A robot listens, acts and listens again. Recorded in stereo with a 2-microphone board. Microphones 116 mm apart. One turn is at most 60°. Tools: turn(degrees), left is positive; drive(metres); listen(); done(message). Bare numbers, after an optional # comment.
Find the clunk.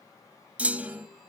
turn(-30)
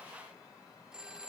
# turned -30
listen()
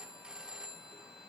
done("I heard a clunk, but can't make it out now. It was about 20° left or 140° right.")